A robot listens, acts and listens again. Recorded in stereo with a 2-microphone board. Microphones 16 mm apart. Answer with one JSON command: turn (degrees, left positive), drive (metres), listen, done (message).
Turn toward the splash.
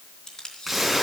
{"turn": -30}
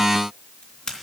{"listen": true}
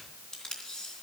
{"done": "I heard a splash, but can't make it out now. It was about 25° left or 145° right."}